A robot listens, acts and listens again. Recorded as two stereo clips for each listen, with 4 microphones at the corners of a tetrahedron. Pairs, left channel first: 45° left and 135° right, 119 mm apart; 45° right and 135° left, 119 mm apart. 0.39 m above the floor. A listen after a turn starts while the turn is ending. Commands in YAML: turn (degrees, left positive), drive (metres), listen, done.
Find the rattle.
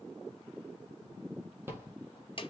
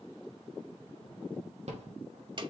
turn: 155
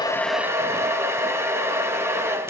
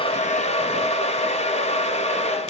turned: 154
listen: true
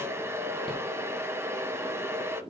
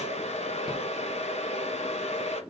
listen: true
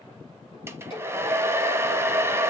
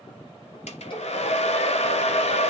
done: "I heard a rattle from this way, but can't make it out now."